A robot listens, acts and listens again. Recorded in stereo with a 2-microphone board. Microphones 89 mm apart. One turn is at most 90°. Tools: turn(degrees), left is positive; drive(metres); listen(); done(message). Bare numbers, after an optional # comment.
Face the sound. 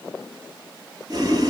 # The boiling: about 45° right or 135° right.
turn(-45)
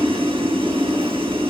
# So it is at 90° right.
turn(-90)
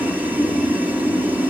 # The boiling is now 20° right.
turn(-20)
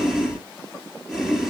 done("Found it: boiling, straight ahead.")